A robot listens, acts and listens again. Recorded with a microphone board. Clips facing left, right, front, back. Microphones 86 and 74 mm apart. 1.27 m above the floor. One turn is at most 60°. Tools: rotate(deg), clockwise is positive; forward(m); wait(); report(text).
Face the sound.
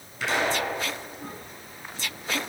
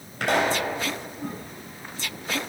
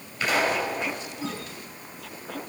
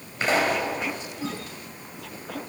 rotate(60)
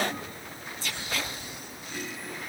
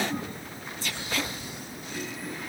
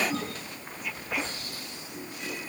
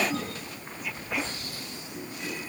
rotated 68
rotate(55)
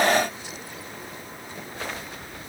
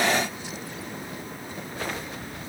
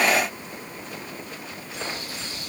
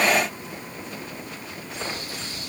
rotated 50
report("I heard a pop from this way, but can't make it out now.")